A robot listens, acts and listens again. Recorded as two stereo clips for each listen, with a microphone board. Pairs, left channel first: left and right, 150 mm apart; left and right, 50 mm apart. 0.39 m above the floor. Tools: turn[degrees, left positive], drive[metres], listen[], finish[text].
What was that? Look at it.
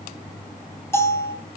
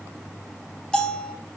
Thought: The bell: about 15° left or 165° left.
Action: turn[15]
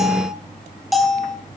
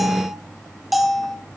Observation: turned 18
Action: finish[Facing the bell, 2 to 4 m away.]